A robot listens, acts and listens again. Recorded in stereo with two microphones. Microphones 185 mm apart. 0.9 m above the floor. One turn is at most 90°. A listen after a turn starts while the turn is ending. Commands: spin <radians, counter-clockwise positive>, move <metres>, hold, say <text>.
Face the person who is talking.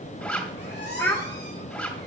spin 0.52
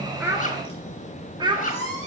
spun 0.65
spin -0.44
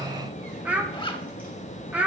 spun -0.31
spin -0.17
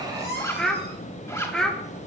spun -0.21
say Found it: a child speaking, straight ahead.